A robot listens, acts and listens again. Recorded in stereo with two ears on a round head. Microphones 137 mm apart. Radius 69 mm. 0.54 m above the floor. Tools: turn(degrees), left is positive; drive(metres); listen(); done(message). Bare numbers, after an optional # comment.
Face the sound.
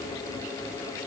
listen()
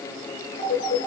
# The phone ringing: about 65° left or 115° left.
turn(65)
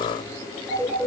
done("Facing the phone ringing.")